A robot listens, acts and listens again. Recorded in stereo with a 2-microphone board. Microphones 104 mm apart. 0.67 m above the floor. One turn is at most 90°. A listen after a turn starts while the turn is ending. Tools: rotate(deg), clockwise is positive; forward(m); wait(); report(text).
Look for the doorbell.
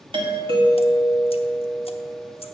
rotate(55)
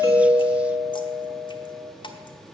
rotate(20)
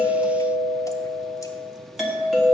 report("Facing the doorbell, 1 to 2 m away.")